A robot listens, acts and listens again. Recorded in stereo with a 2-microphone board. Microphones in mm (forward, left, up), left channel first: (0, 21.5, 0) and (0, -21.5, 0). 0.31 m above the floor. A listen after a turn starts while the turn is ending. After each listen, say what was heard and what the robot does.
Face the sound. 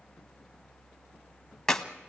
Turn 30° left.
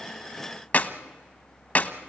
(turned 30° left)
So it is at 135° left. Turn 135° left.
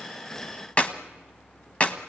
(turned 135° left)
The clap is now 35° left. Turn 35° left.
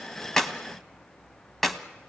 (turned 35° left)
Found it: a clap, straight ahead, 1 to 2 m away.